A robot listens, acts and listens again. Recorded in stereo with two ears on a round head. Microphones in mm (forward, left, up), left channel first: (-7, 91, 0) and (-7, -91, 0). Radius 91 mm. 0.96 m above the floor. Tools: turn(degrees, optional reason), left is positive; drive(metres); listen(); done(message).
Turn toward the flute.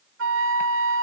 turn(degrees=-70, reason="The flute: about 70° right or 110° right.")
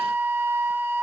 turn(degrees=-10, reason="So it is at 10° right.")
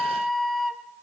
done("Facing the flute.")